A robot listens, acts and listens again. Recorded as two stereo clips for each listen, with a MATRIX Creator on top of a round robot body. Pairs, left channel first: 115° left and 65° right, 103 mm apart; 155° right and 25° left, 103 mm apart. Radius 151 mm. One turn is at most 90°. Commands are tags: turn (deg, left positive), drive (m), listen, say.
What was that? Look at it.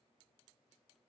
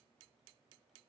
<listen/>
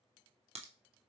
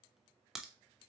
<turn deg="-65"/>
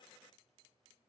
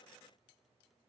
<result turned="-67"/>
<say>Facing where the crack came from. I can't hear it now.</say>